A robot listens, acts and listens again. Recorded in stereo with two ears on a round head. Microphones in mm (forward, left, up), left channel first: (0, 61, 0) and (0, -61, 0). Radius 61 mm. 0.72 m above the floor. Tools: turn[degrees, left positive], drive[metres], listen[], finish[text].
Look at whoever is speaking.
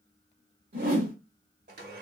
Action: listen[]
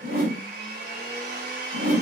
Action: listen[]
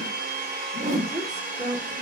Thought: The woman speaking: about 30° right or 150° right.
Action: turn[-30]
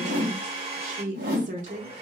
Thought: So it is at 120° right.
Action: turn[-120]
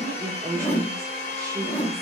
Thought: The woman speaking is now 25° right.
Action: turn[-25]
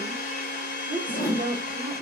Thought: The woman speaking is now 10° right.
Action: turn[-10]
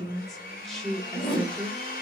Action: finish[Facing the woman speaking.]